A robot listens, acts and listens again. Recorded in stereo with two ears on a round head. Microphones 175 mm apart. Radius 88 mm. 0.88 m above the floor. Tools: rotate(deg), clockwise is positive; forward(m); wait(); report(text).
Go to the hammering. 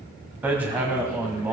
rotate(30)
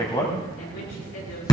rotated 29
rotate(-20)
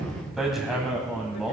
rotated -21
forward(1.0)
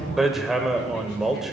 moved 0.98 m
forward(1.0)
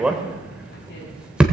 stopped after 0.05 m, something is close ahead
report("Arrived at the hammering, straight ahead.")